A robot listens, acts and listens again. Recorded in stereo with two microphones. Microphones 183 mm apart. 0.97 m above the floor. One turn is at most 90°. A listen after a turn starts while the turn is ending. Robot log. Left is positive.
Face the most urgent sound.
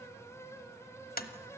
cmd idle
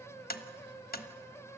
cmd idle
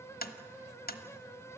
end: I can't make out anything urgent, only tapping.